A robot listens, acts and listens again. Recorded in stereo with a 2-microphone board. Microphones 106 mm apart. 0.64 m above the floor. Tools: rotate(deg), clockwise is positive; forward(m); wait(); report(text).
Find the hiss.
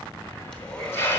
rotate(-25)
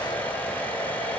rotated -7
wait()
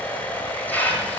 rotate(-20)
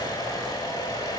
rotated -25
wait()
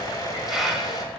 report("Found it: a hiss, straight ahead.")